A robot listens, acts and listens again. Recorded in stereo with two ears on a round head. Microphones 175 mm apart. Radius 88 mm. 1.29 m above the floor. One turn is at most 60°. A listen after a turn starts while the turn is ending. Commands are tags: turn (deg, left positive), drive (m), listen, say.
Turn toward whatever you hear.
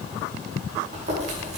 <turn deg="-35"/>
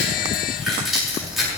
<say>Facing the chewing.</say>